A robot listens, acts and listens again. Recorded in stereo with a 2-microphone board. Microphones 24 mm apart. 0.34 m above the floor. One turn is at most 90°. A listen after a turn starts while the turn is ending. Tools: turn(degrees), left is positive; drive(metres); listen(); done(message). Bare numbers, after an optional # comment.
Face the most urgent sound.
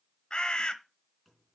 listen()
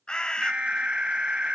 # The alarm: about 60° right or 120° right.
turn(-60)
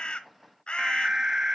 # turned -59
# So it is at 30° right.
turn(-30)
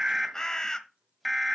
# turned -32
done("Facing the alarm.")